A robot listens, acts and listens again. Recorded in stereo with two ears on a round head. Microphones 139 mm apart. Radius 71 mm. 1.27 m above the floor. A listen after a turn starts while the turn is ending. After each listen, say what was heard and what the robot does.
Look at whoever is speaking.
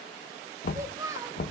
The child speaking: about 20° right or 160° right. Turn 20° right.
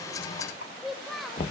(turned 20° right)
Found it: a child speaking, straight ahead, 1 to 2 m away.